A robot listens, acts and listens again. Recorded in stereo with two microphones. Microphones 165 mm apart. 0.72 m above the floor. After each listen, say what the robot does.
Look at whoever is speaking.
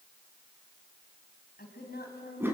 Turn 90° left.
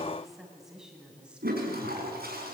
Facing the woman speaking.